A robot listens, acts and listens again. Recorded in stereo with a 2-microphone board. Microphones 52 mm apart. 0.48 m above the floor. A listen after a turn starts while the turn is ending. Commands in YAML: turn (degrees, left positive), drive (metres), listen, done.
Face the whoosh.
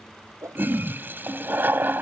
turn: -90
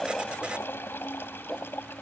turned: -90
listen: true
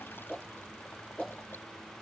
done: "Found it: a whoosh, straight ahead."